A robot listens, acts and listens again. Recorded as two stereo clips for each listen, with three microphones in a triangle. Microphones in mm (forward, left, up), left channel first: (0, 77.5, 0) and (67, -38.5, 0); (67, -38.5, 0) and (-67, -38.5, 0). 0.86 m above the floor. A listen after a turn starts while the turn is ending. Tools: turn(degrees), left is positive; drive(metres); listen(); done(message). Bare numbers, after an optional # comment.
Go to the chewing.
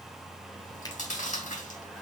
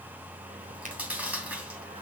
# The chewing: 100° left.
turn(100)
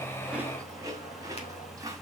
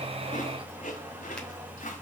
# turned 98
drive(1.0)
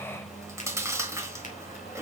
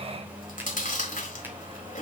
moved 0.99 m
# The chewing is now 10° left.
turn(10)
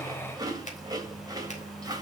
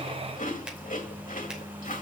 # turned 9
drive(1.0)
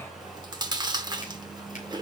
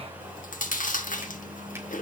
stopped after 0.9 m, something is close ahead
done("Arrived at the chewing, straight ahead.")